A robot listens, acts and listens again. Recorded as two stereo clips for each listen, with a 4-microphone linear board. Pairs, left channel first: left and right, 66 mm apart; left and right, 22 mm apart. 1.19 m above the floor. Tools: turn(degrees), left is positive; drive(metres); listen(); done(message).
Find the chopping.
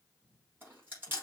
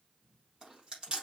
listen()
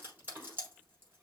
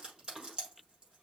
listen()
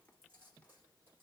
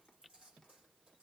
done("I can't make out chopping to turn to.")